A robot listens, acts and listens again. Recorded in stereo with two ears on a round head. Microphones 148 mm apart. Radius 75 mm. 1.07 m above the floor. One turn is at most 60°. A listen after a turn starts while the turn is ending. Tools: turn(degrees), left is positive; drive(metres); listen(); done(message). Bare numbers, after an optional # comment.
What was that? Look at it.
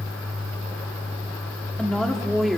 turn(30)
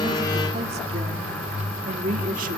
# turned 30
# So it is at 50° right.
turn(-50)
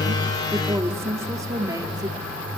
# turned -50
# The woman speaking is now 25° right.
turn(-25)
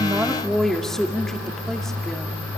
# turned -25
done("Facing the woman speaking.")